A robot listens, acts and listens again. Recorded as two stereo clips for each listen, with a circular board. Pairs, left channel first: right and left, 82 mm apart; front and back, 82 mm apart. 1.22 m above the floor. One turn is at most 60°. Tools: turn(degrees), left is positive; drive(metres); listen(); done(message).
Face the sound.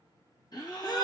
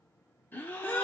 turn(degrees=-60)
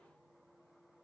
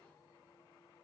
done("I heard a gasp from this way, but can't make it out now.")